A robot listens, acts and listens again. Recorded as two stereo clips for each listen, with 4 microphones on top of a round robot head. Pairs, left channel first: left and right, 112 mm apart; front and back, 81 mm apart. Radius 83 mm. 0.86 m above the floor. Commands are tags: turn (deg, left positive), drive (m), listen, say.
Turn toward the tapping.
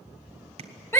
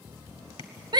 <turn deg="-40"/>
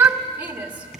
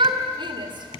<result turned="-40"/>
<listen/>
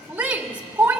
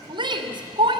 <listen/>
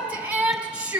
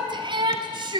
<say>Facing where the tapping came from. I can't hear it now.</say>